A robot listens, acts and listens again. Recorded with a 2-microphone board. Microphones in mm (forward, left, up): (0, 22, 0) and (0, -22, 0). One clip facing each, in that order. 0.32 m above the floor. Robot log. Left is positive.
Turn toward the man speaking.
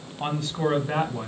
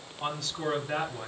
note: The man speaking: about 50° left or 130° left.
cmd yaw +50
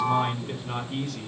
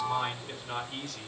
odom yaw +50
note: So it is at 15° left.
cmd yaw +15
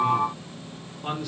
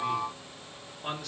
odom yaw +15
note: The man speaking is now 10° left.
cmd yaw +10
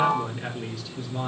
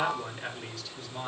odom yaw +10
note: The man speaking is now 10° left.
cmd yaw +10
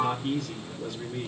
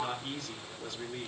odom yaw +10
end: Found it: a man speaking, straight ahead, 2 to 4 m away.